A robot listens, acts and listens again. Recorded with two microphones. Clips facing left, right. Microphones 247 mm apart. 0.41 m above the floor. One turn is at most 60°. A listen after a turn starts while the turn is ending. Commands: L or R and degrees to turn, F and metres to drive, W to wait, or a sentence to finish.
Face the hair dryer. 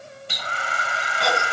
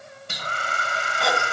R45
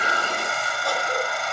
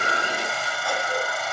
Facing the hair dryer.